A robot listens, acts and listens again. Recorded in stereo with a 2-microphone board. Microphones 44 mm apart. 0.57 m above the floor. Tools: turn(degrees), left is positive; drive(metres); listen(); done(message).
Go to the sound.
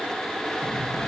turn(degrees=45)
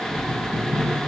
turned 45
turn(degrees=85)
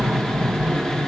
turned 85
drive(metres=1.0)
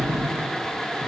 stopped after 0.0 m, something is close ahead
done("Something is in my way. I am facing the cutlery clinking but have not reached it.")